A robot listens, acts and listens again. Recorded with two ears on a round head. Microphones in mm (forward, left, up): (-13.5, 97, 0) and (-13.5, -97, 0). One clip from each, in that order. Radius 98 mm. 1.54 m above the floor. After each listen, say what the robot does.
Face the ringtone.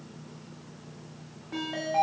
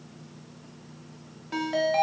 Turn 65° right.
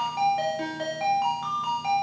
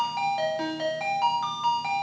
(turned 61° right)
Turn 20° right.
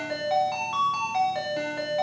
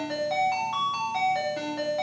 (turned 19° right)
Found it: a ringtone, straight ahead.